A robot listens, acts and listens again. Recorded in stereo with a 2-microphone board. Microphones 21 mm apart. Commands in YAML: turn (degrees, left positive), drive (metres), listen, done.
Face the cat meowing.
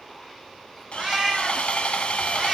turn: -15
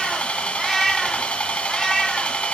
turn: 20
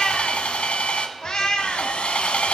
turn: 45
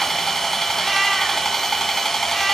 listen: true
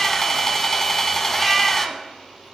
listen: true
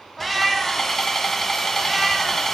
done: "Facing the cat meowing, 1 to 2 m away."